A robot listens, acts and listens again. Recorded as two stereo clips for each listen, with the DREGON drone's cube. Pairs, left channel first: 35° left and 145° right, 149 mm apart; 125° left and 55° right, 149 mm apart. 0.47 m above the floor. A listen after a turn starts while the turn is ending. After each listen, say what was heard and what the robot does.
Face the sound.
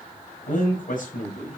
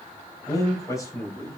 The man speaking: 55° left. Turn 55° left.
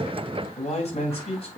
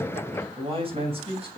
The man speaking is now 10° right. Turn 10° right.
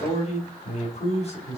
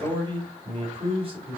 The man speaking is now 10° right. Turn 10° right.
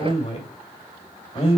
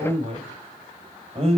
The man speaking is now 10° right. Turn 10° right.
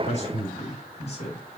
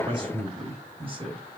Facing the man speaking, 2 to 4 m away.